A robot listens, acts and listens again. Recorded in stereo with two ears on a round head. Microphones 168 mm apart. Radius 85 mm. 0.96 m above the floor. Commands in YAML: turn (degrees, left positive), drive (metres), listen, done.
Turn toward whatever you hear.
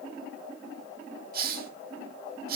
turn: -50
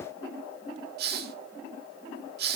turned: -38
turn: -75
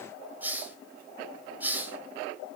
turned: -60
turn: -10
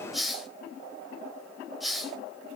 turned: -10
done: "Found it: a hiss, straight ahead, 1 to 2 m away."